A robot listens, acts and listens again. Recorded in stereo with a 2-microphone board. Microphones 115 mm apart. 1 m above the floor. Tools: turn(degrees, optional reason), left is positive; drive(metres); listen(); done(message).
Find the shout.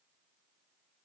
listen()
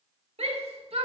turn(degrees=-60, reason="The shout: about 60° right or 120° right.")
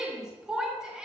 done("Facing the shout, 2 to 4 m away.")